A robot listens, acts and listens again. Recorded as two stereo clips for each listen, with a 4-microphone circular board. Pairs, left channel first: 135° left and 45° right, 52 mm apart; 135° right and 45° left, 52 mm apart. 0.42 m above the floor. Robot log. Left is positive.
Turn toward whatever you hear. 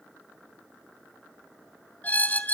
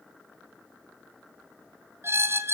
note: The squeak: 80° left.
cmd yaw +80
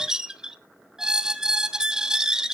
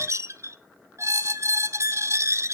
note: The squeak is now 30° left.
cmd yaw +30
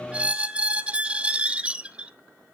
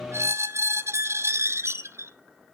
note: The squeak is now 20° left.
cmd yaw +20
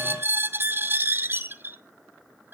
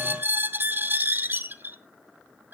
end: Facing the squeak, under 1 m away.